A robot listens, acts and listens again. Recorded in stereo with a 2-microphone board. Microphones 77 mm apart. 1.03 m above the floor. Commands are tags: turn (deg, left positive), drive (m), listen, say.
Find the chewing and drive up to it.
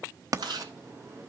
<turn deg="-90"/>
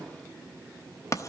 <listen/>
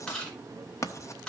<turn deg="10"/>
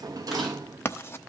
<listen/>
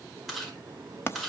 <drive m="1.0"/>
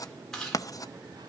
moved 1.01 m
<drive m="1.0"/>
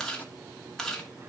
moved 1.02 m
<drive m="1.0"/>
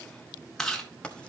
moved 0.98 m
<drive m="1.0"/>
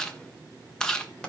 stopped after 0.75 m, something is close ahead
<turn deg="10"/>
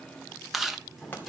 <say>I am next to the chewing.</say>